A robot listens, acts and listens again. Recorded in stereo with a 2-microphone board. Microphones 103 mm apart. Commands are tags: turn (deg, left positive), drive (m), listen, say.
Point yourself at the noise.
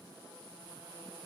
<listen/>
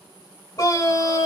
<turn deg="40"/>
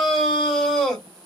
<say>Facing the scream.</say>